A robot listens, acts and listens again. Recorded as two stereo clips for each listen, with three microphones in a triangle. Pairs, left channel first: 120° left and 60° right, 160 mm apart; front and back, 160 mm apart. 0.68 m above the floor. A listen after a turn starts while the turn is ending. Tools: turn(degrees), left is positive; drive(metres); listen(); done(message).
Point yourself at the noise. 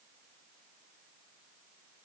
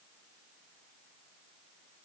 listen()
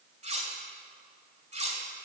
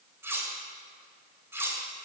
turn(degrees=-105)
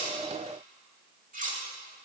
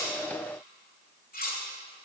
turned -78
turn(degrees=-25)
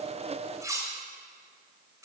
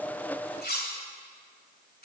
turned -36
turn(degrees=10)
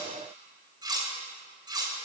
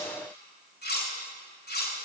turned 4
done("Facing the cutlery clinking.")